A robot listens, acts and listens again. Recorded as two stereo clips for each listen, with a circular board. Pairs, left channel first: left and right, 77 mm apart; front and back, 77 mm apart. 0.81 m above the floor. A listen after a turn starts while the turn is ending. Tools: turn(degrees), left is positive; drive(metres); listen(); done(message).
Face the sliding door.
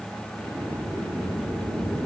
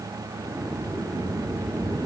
turn(degrees=-95)
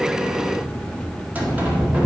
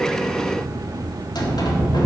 turn(degrees=-20)
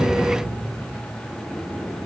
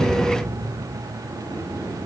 done("Facing the sliding door.")